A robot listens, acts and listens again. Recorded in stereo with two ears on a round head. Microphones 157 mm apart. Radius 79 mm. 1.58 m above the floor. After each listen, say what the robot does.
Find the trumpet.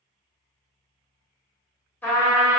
Turn 30° left.
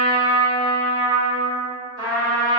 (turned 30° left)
Turn 20° right.
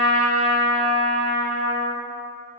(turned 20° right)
Found it: a trumpet, straight ahead, 1 to 2 m away.